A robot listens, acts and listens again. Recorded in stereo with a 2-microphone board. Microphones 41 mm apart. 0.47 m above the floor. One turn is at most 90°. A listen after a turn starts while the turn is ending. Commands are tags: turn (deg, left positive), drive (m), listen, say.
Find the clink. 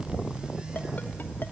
<listen/>
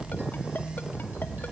<listen/>
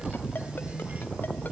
<say>I can't make out a clink.</say>